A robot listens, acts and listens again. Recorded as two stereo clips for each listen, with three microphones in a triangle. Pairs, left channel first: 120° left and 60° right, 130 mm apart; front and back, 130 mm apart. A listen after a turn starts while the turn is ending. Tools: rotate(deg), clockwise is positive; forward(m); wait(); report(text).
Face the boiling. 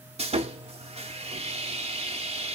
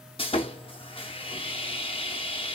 wait()
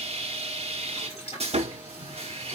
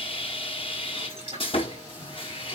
rotate(-145)
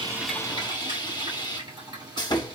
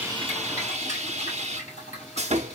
rotate(10)
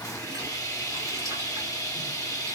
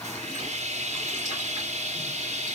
wait()
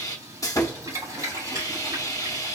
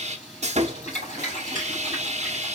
report("Found it: boiling, straight ahead.")